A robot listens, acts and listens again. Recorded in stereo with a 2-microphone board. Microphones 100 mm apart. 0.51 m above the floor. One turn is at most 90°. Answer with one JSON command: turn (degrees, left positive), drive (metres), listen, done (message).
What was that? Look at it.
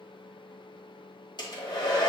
{"turn": 45}
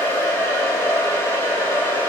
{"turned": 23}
{"turn": 25}
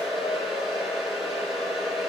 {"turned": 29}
{"done": "Found it: a hair dryer, straight ahead."}